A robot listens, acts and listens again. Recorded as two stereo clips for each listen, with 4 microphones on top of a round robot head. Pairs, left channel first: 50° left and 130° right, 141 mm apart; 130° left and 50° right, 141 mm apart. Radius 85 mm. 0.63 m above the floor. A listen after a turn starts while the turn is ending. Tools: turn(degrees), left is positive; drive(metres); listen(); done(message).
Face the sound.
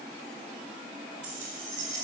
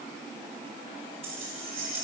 turn(degrees=-95)
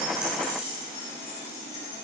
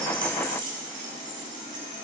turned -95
turn(degrees=10)
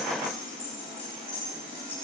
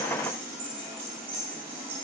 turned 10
done("Facing the keys jangling.")